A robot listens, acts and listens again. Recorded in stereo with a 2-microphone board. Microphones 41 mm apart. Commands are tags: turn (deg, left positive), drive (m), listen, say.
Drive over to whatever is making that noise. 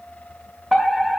<turn deg="30"/>
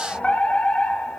<turn deg="150"/>
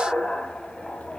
<turn deg="25"/>
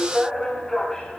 <turn deg="10"/>
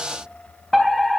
<drive m="1.0"/>
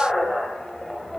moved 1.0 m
<drive m="1.0"/>
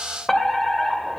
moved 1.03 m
<turn deg="15"/>
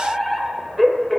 <drive m="1.0"/>
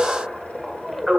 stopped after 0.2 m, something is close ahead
<say>I am next to the fire alarm.</say>